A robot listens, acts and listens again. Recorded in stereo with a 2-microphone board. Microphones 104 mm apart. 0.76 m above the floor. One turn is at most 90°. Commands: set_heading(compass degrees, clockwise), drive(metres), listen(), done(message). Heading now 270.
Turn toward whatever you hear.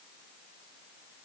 listen()
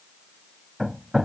set_heading(240)
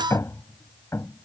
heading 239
set_heading(149)
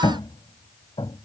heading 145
set_heading(90)
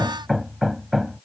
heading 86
done("Facing the hammering.")